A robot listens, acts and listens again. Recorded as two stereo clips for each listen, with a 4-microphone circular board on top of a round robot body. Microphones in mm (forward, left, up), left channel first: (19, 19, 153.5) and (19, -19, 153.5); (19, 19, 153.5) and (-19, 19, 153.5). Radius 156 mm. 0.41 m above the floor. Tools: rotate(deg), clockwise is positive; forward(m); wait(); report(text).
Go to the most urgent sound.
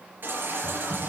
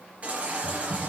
rotate(120)
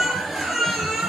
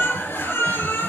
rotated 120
forward(1.0)
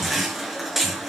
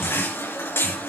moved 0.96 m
forward(1.0)
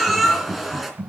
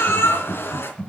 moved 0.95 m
forward(1.0)
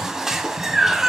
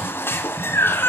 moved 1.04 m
rotate(10)
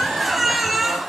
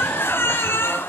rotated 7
forward(1.0)
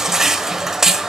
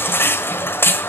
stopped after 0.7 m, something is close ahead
rotate(10)
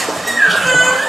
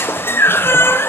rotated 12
report("I am next to the baby crying.")